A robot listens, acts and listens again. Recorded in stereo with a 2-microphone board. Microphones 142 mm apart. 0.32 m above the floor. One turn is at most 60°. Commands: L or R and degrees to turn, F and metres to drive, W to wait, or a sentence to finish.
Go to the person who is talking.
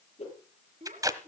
R60
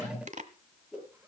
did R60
W
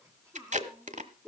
R20
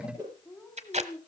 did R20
F1.0
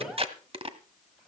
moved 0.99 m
W
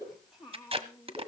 F1.0
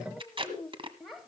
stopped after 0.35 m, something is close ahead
I am next to the child speaking.